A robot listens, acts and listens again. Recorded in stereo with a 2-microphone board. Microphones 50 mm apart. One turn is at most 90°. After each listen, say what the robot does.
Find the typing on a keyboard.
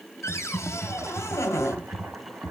Turn 30° left.
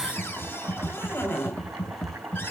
Turn 90° left.
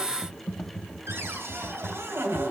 Turn 25° left.
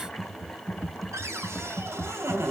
Turn 10° left.
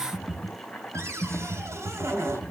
Found it: typing on a keyboard, straight ahead.